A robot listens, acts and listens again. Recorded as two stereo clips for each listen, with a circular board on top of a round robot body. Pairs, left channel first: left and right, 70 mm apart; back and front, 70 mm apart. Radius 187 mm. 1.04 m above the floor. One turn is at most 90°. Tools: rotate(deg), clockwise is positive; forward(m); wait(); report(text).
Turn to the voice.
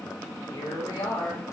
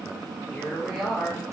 rotate(-85)
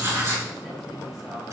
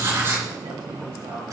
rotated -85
wait()
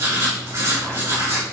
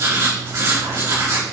wait()
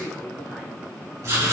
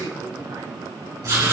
rotate(10)
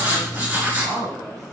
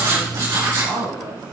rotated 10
report("Found it: a woman speaking, straight ahead, over 4 m away.")